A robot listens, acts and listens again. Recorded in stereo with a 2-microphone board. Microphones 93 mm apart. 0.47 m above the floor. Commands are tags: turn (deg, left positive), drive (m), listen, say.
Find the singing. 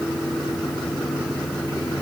<listen/>
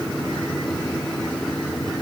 <listen/>
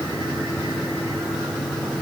<say>I can't make out singing.</say>